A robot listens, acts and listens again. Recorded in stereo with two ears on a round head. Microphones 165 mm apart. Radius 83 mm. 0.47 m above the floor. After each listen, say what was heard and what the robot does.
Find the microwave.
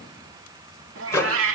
The microwave: about 15° left or 165° left. Turn 15° left.
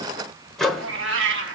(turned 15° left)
Facing the microwave.